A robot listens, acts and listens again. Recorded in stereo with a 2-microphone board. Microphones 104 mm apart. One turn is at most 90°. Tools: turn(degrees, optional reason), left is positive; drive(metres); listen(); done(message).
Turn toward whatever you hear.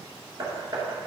turn(degrees=-35, reason="The hammering: about 35° right or 145° right.")
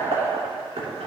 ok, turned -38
turn(degrees=-90, reason="So it is at 105° right.")
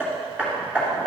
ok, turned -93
turn(degrees=-15, reason="The hammering is now 15° right.")
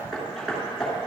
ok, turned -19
done("Facing the hammering, 2 to 4 m away.")